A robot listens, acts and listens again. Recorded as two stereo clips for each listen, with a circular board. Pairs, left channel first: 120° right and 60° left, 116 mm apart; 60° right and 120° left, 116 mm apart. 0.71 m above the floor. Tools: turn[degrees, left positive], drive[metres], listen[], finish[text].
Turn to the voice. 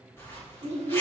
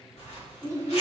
Thought: The child speaking: 65° left.
Action: turn[65]
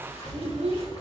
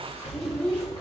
Action: listen[]
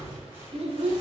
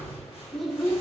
Thought: The child speaking is now 25° left.
Action: turn[25]
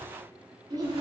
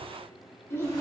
Action: finish[Found it: a child speaking, straight ahead.]